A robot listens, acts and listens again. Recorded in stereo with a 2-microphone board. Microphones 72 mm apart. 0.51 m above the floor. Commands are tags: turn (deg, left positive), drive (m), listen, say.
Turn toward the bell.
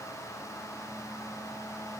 <listen/>
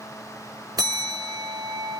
<turn deg="-60"/>
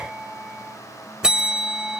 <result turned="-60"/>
<turn deg="-10"/>
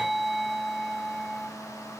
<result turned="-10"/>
<say>Found it: a bell, straight ahead.</say>